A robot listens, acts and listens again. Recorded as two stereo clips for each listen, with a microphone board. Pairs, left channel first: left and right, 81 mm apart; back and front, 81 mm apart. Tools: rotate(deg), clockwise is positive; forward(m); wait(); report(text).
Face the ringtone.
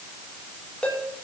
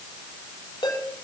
rotate(-165)
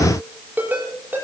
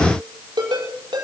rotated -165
rotate(25)
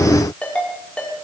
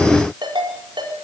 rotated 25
rotate(-15)
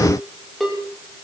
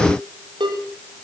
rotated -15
report("Facing the ringtone, over 4 m away.")